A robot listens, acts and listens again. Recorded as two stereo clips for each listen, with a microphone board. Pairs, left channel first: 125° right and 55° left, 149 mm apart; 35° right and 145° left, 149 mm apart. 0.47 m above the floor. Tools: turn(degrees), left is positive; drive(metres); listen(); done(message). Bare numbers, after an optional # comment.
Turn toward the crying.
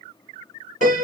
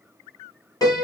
listen()
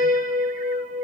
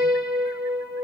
listen()
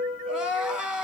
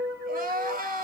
# The crying: 140° left.
turn(140)
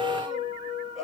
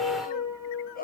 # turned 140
# The crying is now 35° right.
turn(-35)
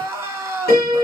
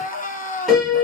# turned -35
# The crying is now 15° right.
turn(-15)
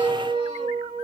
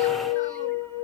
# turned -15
listen()
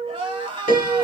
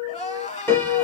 done("Facing the crying.")